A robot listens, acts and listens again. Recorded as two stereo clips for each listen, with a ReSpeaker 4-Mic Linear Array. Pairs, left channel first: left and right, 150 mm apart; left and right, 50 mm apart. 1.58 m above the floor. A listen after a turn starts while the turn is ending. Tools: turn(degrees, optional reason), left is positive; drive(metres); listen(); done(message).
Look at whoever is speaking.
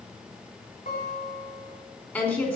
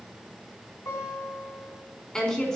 turn(degrees=30)
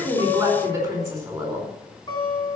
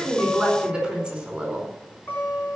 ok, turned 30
turn(degrees=-20, reason="So it is at 20° right.")
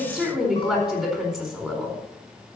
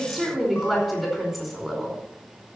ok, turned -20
done("Facing the woman speaking, over 4 m away.")